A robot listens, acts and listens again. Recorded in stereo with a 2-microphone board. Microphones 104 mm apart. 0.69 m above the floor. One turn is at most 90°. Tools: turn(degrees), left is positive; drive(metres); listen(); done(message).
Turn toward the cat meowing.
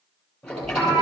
turn(degrees=-35)
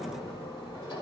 listen()
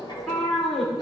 done("Facing the cat meowing.")